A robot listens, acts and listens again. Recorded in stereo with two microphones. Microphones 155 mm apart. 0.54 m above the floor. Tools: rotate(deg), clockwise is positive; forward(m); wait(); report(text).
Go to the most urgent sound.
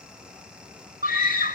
rotate(65)
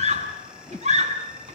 rotate(45)
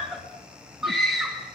forward(1.0)
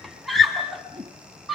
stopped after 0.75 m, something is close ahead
report("Something is in my way. I am facing the scream but have not reached it.")